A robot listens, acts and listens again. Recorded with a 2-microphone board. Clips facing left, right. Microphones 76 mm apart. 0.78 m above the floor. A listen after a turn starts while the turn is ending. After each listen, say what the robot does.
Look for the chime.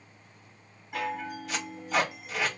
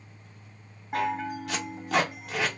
Turn 45° right.
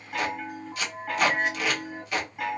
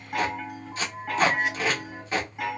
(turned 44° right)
Facing the chime.